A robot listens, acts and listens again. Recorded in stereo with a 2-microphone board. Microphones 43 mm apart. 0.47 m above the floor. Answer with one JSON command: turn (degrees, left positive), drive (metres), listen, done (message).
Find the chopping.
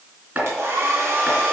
{"turn": -40}
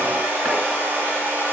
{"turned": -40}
{"listen": true}
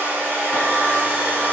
{"listen": true}
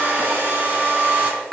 {"done": "Facing the chopping."}